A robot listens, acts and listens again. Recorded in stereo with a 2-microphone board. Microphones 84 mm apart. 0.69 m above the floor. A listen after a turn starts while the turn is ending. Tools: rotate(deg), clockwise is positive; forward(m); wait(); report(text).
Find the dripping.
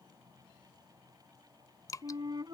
rotate(-45)
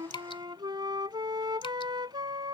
wait()
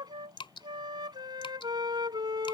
rotate(-90)
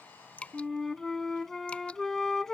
wait()
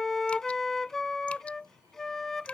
wait()
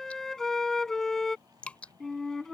rotate(-15)
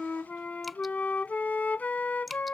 wait()
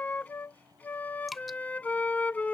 report("Found it: dripping, straight ahead.")